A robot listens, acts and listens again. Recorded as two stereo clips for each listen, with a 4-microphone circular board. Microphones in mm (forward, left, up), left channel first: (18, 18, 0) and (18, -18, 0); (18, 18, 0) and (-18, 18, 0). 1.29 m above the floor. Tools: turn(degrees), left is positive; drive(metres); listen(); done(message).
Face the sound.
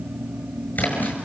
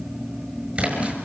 turn(degrees=125)
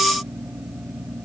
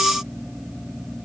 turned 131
done("Facing where the splash came from. I can't hear it now.")